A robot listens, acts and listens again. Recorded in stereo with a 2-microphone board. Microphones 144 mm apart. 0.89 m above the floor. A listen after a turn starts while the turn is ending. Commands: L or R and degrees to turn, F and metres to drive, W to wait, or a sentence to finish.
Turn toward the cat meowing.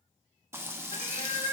L45
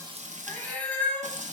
L10
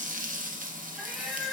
Found it: a cat meowing, straight ahead.